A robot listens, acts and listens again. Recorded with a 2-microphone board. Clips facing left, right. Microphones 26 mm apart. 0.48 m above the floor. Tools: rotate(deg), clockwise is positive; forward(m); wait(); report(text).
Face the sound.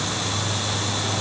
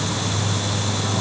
wait()
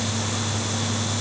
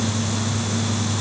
wait()
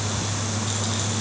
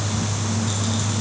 report("I can't make out anything to turn to.")